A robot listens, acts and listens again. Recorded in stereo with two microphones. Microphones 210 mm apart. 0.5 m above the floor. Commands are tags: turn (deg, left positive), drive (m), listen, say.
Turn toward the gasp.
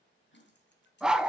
<turn deg="65"/>
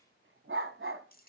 <listen/>
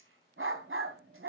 <say>I heard a gasp, but can't make it out now. It was about straight ahead or 50° left.</say>